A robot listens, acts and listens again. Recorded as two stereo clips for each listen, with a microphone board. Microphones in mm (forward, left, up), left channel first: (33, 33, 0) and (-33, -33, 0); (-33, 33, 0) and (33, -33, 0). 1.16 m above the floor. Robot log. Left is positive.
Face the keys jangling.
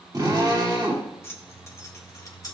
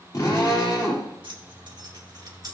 end: Facing the keys jangling.